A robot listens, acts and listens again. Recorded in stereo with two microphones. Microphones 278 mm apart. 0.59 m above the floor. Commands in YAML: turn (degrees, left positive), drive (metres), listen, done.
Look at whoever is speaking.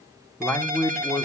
turn: 30
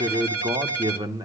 turn: -20
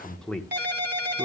done: "Found it: a man speaking, straight ahead."